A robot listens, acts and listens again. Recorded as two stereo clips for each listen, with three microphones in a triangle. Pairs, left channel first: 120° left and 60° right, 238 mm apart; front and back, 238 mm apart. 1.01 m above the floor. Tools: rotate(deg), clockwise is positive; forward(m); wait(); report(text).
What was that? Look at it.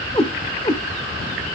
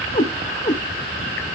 rotate(-55)
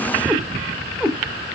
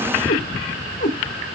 rotate(-35)
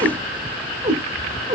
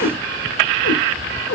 report("Found it: a cat meowing, straight ahead.")